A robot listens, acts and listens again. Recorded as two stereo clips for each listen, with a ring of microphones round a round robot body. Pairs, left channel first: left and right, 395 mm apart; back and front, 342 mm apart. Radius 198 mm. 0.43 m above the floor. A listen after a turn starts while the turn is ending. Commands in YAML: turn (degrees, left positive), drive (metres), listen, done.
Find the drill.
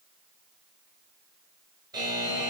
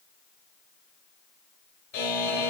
listen: true
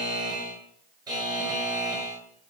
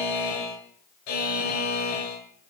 listen: true
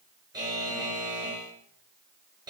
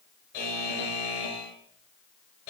done: "I can't make out a drill to turn to."